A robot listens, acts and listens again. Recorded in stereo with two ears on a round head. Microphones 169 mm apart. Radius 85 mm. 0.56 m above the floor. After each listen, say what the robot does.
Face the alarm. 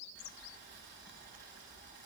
Keep listening.
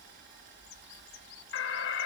Turn 65° left.
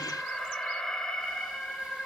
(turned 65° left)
Facing the alarm, 1 to 2 m away.